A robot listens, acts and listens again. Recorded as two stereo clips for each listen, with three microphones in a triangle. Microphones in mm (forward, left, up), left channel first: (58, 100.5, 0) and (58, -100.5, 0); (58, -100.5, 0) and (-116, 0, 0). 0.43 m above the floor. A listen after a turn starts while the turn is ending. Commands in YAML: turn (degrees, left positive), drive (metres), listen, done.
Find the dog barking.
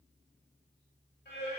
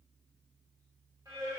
listen: true
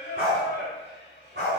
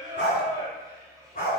turn: -75
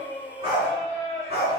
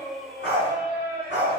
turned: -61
turn: -35
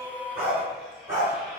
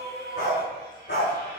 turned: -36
turn: -15
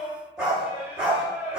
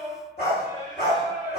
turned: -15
done: "Found it: a dog barking, straight ahead."